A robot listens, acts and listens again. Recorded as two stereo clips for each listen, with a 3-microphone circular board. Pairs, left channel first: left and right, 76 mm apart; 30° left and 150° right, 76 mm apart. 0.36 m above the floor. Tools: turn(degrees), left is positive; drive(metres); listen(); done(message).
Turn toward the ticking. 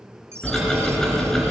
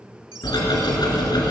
done("Facing the ticking, 2 to 4 m away.")